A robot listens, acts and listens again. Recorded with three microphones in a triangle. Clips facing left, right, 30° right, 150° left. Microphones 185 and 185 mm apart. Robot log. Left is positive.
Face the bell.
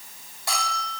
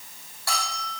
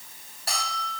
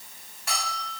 note: The bell: 20° left.
cmd yaw +20
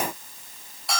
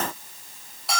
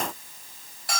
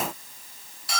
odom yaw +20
end: Found it: a bell, straight ahead.